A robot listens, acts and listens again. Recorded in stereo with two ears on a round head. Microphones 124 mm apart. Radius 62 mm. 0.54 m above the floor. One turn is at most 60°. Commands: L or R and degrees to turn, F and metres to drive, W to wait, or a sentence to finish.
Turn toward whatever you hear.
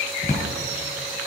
L50
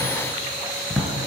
Found it: a drawer, straight ahead, 1 to 2 m away.